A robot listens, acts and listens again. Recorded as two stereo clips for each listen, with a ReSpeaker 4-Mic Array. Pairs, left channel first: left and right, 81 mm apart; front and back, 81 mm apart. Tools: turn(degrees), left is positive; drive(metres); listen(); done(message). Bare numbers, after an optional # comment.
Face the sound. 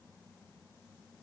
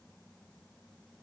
listen()
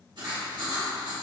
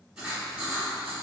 # The writing: 100° right.
turn(-100)
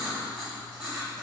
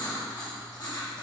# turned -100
# The writing is now 10° right.
turn(-10)
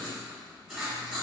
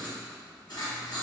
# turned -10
done("Facing the writing, 1 to 2 m away.")